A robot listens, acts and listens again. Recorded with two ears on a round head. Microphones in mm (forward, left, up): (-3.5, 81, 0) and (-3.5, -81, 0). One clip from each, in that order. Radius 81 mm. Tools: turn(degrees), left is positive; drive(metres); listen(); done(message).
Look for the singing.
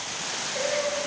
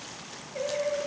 turn(degrees=90)
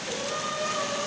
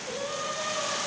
turn(degrees=-10)
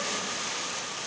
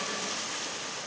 listen()
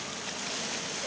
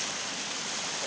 listen()
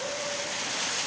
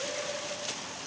done("I heard singing from this way, but can't make it out now.")